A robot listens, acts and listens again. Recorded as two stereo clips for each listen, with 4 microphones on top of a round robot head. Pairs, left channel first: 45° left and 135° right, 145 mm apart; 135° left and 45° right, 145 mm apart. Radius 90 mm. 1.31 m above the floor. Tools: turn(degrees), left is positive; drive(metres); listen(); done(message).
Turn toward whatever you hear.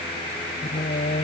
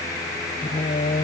turn(degrees=90)
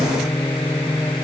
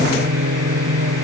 turn(degrees=-35)
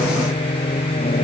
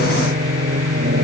turn(degrees=-10)
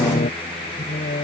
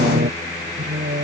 done("Facing the singing.")